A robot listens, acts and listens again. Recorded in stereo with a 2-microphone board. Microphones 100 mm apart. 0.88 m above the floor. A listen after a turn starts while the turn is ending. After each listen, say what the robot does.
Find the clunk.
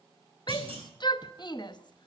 Turn 70° right.
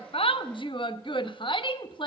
Keep listening.
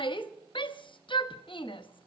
I heard a clunk, but can't make it out now. It was about straight ahead or 40° right.